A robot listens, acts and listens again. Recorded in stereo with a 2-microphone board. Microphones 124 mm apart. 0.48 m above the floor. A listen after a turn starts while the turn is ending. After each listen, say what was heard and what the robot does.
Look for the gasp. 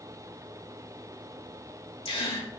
The gasp: about 50° left or 130° left. Turn 50° left.
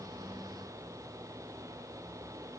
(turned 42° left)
Keep listening.
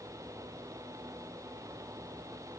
I heard a gasp, but can't make it out now. It was about 10° left or 85° left.